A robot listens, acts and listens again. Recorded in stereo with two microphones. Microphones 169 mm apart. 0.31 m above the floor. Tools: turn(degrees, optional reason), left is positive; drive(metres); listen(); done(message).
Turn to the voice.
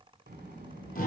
turn(degrees=-70, reason="The child speaking: about 70° right or 110° right.")
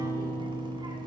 listen()
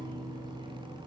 turn(degrees=-25, reason="So it is at 25° right.")
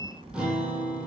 turn(degrees=-40, reason="The child speaking is now 40° right.")
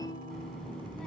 done("Facing the child speaking.")